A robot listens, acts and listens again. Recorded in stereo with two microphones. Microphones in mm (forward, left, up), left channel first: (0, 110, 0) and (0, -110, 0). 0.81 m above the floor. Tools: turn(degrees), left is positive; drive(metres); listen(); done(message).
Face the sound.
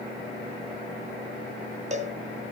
turn(degrees=-30)
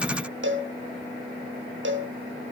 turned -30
turn(degrees=-115)
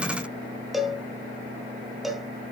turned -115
done("Facing the cowbell, under 1 m away.")